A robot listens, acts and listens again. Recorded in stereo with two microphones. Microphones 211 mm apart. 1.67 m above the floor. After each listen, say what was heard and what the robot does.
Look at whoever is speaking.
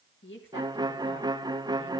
The woman speaking: about 60° left or 120° left. Turn 60° left.
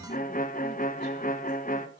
Keep listening.
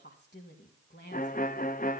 So it is at 55° left. Turn 55° left.
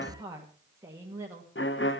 The woman speaking is now 15° right. Turn 15° right.
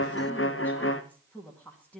Found it: a woman speaking, straight ahead, 2 to 4 m away.